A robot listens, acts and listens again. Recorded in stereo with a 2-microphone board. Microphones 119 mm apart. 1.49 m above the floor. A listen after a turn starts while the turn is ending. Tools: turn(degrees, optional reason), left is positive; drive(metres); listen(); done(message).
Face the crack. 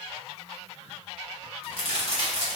turn(degrees=-55, reason="The crack: about 55° right or 125° right.")
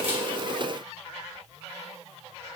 listen()
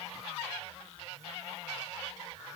done("I heard a crack, but can't make it out now. It was about straight ahead or 70° right.")